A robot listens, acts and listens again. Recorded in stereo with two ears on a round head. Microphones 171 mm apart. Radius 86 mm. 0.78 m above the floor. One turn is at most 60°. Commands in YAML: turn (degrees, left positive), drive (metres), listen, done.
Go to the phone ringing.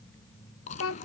listen: true
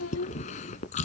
listen: true
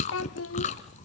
done: "I can't make out a phone ringing to turn to."